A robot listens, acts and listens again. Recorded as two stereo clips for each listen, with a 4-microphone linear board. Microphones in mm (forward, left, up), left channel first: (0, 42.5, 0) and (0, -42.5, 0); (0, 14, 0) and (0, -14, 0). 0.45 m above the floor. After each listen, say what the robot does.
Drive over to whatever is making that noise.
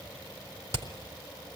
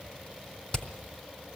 Turn 35° left.
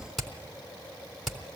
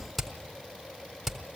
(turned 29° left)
Drive 1.0 m forward.
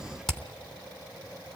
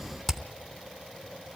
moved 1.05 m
Drive 1.0 m forward.
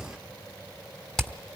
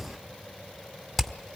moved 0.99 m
Drive 1.0 m forward.
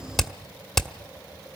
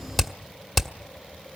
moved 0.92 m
Drive 1.0 m forward.
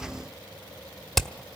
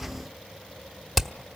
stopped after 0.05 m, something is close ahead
I am next to the hammering.